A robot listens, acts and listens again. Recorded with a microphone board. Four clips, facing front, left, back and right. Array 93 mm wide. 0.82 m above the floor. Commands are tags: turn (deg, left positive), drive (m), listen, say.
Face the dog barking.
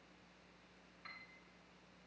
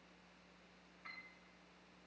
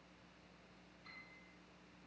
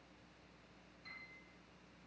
<listen/>
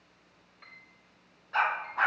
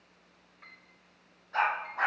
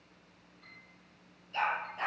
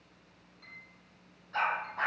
<say>Found it: a dog barking, straight ahead, over 4 m away.</say>